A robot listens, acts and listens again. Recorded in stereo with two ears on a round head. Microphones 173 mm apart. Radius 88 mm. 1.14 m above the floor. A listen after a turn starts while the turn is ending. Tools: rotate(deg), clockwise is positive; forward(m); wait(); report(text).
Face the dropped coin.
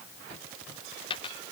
rotate(-25)
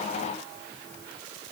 wait()
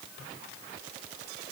report("I heard a dropped coin, but can't make it out now. It was about straight ahead or 130° left.")